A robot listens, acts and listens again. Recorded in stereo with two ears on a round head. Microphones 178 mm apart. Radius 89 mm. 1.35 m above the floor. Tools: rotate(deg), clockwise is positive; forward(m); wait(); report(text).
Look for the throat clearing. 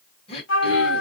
rotate(-30)
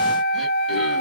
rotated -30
wait()
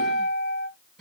wait()
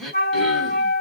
report("Facing the throat clearing, 1 to 2 m away.")